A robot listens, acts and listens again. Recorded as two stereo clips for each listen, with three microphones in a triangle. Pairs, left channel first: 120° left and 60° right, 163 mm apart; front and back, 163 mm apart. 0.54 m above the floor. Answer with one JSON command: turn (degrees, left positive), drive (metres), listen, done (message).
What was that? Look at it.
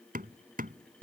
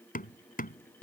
{"turn": -30}
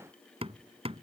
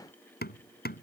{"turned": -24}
{"done": "Found it: hammering, straight ahead."}